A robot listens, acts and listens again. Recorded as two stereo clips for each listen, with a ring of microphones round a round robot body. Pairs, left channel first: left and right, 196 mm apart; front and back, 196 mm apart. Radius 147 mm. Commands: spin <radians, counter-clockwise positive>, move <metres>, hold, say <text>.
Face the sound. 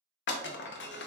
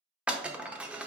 spin 1.66
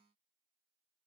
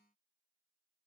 say Facing where the breaking glass came from. I can't hear it now.